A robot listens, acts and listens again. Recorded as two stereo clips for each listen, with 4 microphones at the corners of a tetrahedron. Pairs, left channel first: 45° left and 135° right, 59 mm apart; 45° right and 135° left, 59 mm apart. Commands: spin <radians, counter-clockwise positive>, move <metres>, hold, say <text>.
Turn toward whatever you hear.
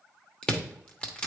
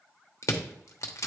spin -0.44
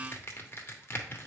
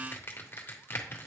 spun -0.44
say Found it: crushing, straight ahead, 1 to 2 m away.